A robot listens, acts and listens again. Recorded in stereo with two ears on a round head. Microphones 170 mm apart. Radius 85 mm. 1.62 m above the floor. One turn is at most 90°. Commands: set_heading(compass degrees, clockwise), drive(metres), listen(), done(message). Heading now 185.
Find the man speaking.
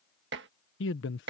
set_heading(115)
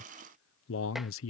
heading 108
set_heading(28)
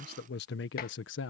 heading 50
set_heading(340)
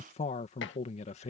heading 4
set_heading(329)
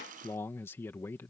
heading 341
set_heading(331)
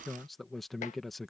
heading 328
done("Facing the man speaking.")